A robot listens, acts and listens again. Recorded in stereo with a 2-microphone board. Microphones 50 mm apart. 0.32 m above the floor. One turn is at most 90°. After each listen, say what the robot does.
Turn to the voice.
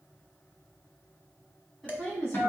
Turn 30° left.
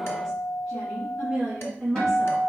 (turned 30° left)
Facing the woman speaking, 2 to 4 m away.